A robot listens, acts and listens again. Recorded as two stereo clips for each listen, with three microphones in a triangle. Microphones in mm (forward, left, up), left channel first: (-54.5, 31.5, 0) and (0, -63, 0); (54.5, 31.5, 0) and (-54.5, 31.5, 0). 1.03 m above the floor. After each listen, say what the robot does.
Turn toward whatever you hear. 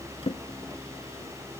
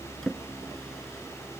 Turn 85° left.
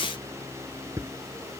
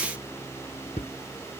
Found it: a drawer, straight ahead.